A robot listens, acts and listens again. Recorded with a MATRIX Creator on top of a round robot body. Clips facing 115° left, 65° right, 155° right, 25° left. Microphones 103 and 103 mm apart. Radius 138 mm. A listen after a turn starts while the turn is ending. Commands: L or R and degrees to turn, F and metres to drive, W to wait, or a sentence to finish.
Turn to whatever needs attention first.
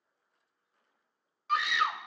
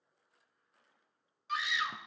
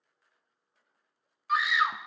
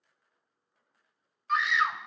L120
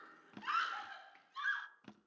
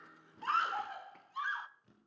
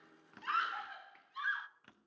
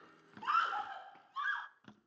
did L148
R30
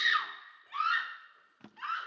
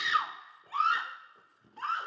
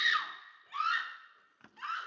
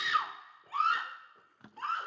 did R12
R20
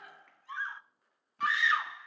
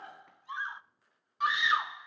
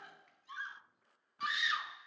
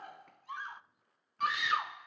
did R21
Facing the scream.